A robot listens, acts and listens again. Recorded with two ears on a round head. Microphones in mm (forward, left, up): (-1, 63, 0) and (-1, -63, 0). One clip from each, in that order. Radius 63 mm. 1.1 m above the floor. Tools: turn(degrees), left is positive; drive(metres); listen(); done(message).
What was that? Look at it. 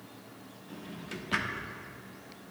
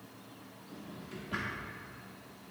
turn(degrees=55)
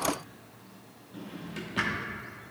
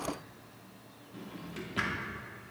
done("Found it: a drawer, straight ahead.")